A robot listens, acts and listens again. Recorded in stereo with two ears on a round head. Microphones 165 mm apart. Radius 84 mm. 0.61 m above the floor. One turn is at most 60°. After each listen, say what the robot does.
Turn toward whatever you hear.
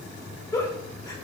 Turn 20° left.
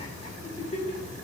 Turn 60° left.
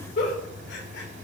Turn 60° left.
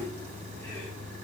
Turn 25° left.
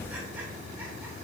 Keep listening.
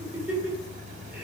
Turn 10° right.
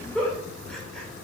Found it: a giggle, straight ahead, 2 to 4 m away.